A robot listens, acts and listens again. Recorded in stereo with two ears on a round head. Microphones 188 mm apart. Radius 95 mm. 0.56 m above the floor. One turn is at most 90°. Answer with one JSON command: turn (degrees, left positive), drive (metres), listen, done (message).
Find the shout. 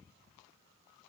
{"listen": true}
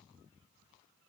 {"listen": true}
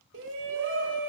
{"turn": -60}
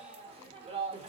{"turn": -30}
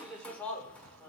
{"done": "Found it: a shout, straight ahead."}